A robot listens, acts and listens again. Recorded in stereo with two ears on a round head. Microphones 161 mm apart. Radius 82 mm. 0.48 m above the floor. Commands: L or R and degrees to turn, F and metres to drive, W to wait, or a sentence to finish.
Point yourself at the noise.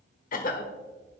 L50
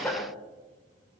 L15
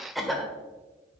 Found it: a cough, straight ahead.